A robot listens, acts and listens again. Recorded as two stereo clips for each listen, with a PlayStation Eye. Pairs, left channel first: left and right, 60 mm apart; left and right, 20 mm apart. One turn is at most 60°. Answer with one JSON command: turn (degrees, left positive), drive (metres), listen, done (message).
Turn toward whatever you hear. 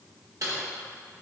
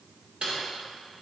{"turn": -60}
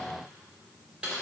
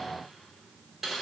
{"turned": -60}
{"turn": -20}
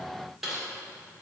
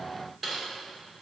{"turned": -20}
{"done": "Found it: typing on a keyboard, straight ahead."}